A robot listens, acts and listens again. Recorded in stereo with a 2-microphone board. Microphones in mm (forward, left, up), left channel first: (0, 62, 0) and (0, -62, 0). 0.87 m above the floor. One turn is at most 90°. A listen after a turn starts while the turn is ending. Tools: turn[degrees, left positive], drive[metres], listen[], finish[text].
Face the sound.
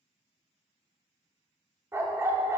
Thought: The dog barking: about 20° right or 160° right.
Action: turn[-20]
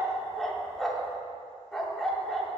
Action: finish[Facing the dog barking.]